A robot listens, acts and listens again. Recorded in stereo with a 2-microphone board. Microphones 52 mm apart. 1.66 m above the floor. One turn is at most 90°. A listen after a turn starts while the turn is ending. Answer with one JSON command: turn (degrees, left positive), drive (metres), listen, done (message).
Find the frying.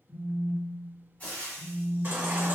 {"turn": 30}
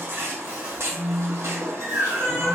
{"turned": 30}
{"listen": true}
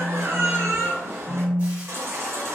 {"listen": true}
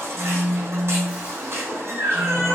{"done": "I heard frying, but can't make it out now. It was about straight ahead or 120° left."}